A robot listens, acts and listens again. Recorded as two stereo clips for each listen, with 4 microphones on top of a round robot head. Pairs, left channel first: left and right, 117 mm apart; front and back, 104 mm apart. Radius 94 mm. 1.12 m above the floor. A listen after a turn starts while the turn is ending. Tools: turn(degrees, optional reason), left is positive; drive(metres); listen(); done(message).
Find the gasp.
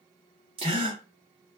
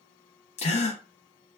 turn(degrees=-35, reason="The gasp: 35° right.")
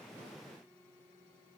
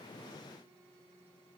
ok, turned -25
turn(degrees=-10, reason="Nothing new. It was at 10° right.")
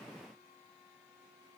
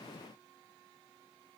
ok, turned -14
done("Facing where the gasp came from. I can't hear it now.")